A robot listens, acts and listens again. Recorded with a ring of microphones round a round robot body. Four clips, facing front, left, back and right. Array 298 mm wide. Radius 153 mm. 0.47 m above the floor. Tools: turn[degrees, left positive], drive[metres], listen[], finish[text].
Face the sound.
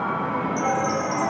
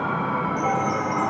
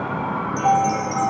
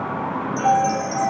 Thought: The chime: 95° right.
Action: turn[-95]
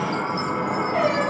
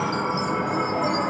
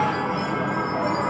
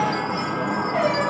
Thought: The chime is now 10° left.
Action: turn[10]
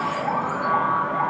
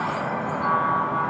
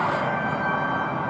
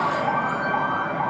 Action: listen[]
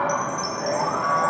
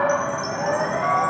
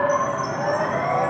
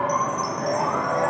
Action: finish[Facing the chime, 1 to 2 m away.]